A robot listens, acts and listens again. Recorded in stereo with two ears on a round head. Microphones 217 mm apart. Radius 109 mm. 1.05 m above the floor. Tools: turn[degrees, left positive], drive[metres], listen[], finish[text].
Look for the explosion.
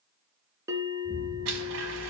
Thought: The explosion: about 30° left or 150° left.
Action: turn[30]
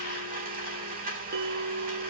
Action: listen[]
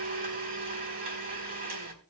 Action: finish[I heard an explosion, but can't make it out now. It was about straight ahead or 120° left.]